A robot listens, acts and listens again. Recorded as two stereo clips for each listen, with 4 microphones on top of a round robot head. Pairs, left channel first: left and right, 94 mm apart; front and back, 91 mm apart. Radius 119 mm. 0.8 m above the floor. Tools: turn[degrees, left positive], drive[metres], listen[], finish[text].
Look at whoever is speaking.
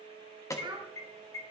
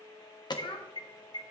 Thought: The child speaking: 40° right.
Action: turn[-40]
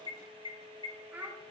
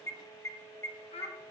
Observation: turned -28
Thought: The child speaking is now 15° right.
Action: turn[-15]
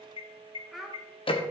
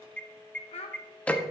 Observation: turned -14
Action: finish[Facing the child speaking, 1 to 2 m away.]